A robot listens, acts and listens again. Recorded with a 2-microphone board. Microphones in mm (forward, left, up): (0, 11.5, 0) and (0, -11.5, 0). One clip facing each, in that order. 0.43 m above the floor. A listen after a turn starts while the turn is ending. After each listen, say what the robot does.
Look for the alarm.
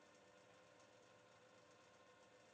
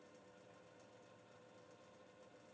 Keep listening.
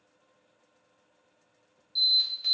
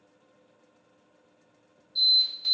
Turn 45° left.
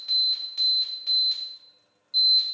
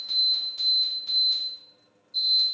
Turn 75° left.
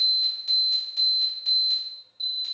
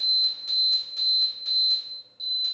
Facing the alarm, 1 to 2 m away.